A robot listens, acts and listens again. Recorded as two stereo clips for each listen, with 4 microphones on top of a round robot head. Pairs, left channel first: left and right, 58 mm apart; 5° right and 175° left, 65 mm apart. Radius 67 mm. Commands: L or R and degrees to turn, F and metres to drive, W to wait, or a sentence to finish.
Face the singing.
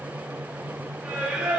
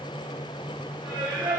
R150
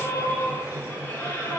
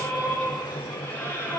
L50
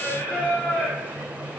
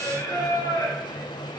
L25
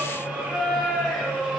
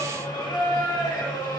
Facing the singing, over 4 m away.